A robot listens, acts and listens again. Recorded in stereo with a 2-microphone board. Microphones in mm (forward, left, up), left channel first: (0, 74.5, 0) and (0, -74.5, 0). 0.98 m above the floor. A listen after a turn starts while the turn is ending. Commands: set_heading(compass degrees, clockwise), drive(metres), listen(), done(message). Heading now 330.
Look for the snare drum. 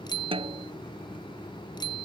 set_heading(10)
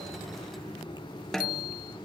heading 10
done("Found it: a snare drum, straight ahead.")